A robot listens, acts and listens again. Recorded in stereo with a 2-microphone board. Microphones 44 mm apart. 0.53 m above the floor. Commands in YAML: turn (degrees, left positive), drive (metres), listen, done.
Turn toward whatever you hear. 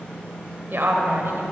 turn: -65
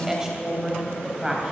turn: -20
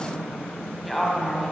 done: "Found it: a woman speaking, straight ahead."